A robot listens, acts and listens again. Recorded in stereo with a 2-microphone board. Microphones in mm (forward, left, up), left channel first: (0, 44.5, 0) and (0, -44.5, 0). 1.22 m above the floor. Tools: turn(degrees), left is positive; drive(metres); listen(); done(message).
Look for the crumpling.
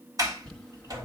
turn(degrees=30)
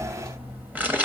turn(degrees=-20)
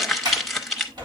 done("Found it: crumpling, straight ahead.")